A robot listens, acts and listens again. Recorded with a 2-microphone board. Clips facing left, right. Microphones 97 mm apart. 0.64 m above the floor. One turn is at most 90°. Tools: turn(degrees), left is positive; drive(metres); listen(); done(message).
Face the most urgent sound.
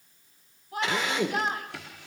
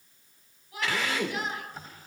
turn(degrees=45)
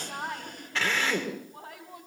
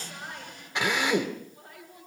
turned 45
turn(degrees=90)
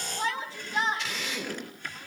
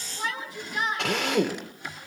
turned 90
turn(degrees=30)
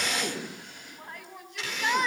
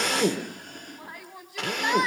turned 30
done("Facing the shout, over 4 m away.")